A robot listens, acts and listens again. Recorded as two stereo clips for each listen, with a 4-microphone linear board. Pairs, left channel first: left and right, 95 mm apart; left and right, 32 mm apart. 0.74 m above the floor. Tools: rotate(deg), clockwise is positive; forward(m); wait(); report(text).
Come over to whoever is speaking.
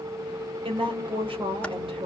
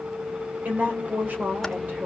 rotate(65)
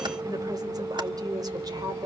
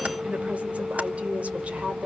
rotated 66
rotate(45)
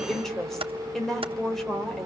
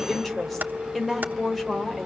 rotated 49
forward(1.0)
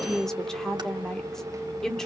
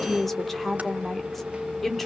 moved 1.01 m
forward(1.0)
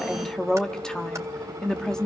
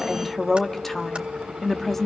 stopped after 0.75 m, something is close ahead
rotate(-10)
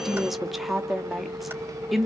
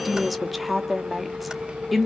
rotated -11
report("I am next to the woman speaking.")